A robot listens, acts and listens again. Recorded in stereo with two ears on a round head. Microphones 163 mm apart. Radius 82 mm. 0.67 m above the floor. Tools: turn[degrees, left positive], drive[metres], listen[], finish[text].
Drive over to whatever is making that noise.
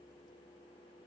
Action: listen[]
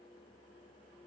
Action: listen[]
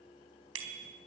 Action: turn[-90]
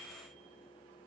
Action: listen[]
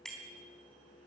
Action: drive[1.0]
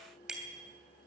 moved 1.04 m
Action: drive[1.0]
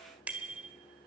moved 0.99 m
Thought: The bicycle bell is now 10° right.
Action: turn[-10]
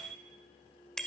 Action: drive[1.0]
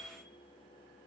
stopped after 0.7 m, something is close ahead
Action: listen[]
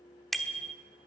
Action: finish[I am next to the bicycle bell.]